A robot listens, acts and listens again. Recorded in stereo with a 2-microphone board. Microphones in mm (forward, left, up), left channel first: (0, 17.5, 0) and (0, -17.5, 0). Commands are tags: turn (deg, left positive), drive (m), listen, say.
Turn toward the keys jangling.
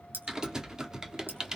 <turn deg="-75"/>
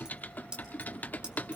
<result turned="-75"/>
<turn deg="-25"/>
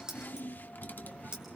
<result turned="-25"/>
<turn deg="-25"/>
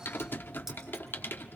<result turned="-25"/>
<listen/>
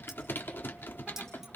<listen/>
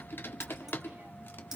<say>Facing where the keys jangling came from. I can't hear it now.</say>